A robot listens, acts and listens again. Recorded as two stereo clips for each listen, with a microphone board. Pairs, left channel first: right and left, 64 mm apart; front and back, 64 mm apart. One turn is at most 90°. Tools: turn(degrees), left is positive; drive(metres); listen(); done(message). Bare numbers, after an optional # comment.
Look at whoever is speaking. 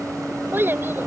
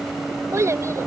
# The child speaking: 145° left.
turn(90)
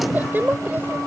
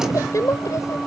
# The child speaking is now 30° left.
turn(30)
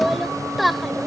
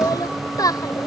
done("Facing the child speaking.")